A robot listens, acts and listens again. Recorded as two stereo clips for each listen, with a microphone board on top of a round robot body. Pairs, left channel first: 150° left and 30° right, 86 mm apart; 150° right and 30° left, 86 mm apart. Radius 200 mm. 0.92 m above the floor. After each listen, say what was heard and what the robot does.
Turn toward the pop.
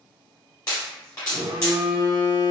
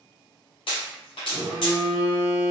The pop: 160° right. Turn 160° right.
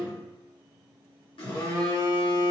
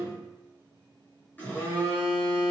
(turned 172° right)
Nothing new. It was at 15° left. Turn 15° left.
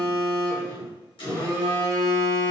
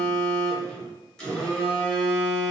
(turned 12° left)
Facing where the pop came from. I can't hear it now.